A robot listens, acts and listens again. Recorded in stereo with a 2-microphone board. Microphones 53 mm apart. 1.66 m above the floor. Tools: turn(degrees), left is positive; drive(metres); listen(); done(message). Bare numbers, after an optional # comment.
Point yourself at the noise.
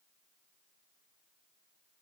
listen()
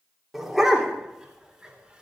turn(-30)
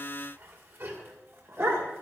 # So it is at 125° right.
turn(-125)
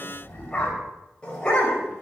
# The dog barking is now 20° left.
turn(20)
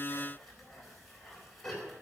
done("Found it: a dog barking, straight ahead, over 4 m away.")